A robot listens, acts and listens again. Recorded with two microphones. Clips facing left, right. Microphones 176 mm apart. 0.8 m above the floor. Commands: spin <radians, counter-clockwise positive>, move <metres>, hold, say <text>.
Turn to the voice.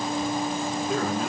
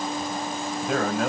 spin -1.57
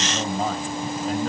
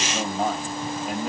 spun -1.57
spin -0.17
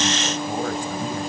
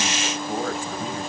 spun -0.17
hold
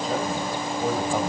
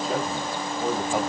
say Found it: a man speaking, straight ahead, over 4 m away.